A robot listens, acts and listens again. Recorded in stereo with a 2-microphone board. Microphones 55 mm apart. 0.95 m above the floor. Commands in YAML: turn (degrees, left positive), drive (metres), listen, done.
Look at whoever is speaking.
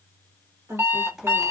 turn: -75
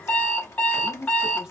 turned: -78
turn: -10
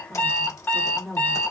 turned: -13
done: "Found it: a woman speaking, straight ahead."